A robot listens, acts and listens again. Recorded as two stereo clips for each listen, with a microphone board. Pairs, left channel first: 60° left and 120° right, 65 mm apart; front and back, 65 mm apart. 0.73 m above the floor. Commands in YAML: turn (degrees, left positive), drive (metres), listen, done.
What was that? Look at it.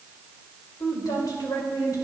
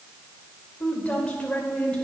turn: 70
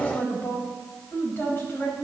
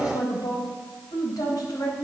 done: "Found it: a woman speaking, straight ahead, over 4 m away."